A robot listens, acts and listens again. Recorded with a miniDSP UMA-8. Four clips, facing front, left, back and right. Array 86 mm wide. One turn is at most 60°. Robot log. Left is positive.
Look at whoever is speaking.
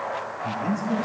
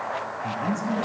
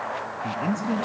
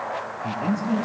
note: The man speaking: 165° right.
cmd yaw -60
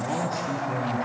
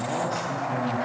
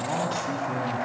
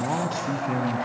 note: The man speaking is now 105° right.
cmd yaw -60
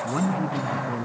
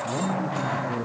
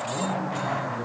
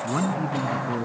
note: The man speaking is now 55° right.
cmd yaw -55
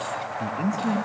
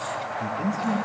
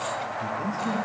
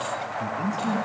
end: Facing the man speaking, 2 to 4 m away.